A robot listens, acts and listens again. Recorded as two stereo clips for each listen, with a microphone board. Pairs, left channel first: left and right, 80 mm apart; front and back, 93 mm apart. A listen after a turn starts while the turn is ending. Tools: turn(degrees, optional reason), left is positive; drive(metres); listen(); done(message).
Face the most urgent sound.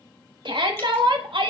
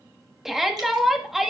turn(degrees=-95, reason="The shout: 95° right.")
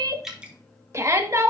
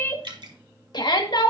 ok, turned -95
turn(degrees=-35, reason="The shout is now 35° right.")
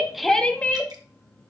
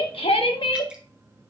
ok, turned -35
turn(degrees=15, reason="The shout is now 15° left.")
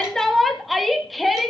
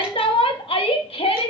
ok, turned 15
done("Facing the shout.")